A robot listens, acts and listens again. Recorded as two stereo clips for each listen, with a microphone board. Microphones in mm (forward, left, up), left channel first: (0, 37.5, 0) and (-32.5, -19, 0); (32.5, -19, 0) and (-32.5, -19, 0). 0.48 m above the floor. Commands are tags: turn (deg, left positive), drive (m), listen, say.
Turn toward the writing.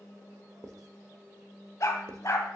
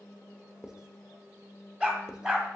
<turn deg="-105"/>
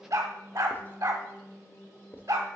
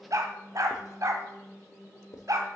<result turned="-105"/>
<turn deg="10"/>
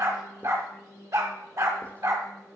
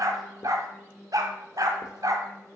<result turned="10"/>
<listen/>
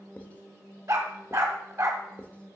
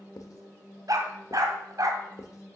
<say>Facing the writing, under 1 m away.</say>